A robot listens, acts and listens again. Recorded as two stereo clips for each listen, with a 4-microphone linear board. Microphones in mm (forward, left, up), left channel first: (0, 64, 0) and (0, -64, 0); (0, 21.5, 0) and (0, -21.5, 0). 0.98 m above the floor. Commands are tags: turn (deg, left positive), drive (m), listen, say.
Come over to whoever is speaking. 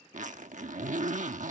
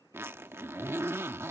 <listen/>
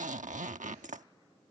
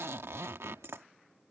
<listen/>
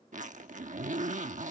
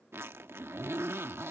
<say>I can't make out anyone speaking to turn to.</say>